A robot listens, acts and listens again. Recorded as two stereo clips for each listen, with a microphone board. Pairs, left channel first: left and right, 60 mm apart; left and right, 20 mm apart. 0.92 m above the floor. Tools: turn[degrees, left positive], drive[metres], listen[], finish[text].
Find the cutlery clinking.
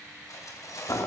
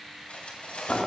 Thought: The cutlery clinking: about 70° left or 110° left.
Action: turn[70]
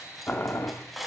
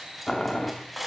Action: finish[Facing the cutlery clinking, 2 to 4 m away.]